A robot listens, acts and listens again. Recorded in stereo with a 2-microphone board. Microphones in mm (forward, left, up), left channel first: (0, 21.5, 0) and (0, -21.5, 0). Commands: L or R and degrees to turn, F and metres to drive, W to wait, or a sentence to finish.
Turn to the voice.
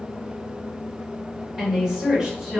R30
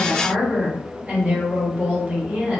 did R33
R145
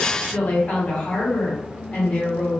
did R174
L30
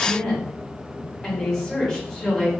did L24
Facing the woman speaking.